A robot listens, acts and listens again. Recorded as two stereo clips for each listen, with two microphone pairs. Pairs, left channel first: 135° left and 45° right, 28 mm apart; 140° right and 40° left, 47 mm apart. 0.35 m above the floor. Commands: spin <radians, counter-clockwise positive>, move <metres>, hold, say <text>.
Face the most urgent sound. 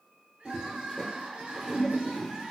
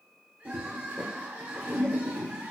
say Facing the crying.